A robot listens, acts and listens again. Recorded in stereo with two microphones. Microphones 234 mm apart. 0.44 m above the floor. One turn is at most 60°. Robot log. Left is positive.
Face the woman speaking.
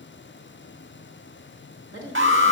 note: The woman speaking: about 60° right or 120° right.
cmd yaw -60
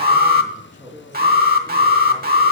note: So it is at 20° right.
cmd yaw -20
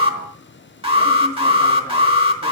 cmd idle
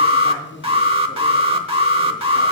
note: The woman speaking is now 15° right.
cmd yaw -15
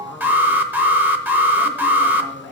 end: Facing the woman speaking, over 4 m away.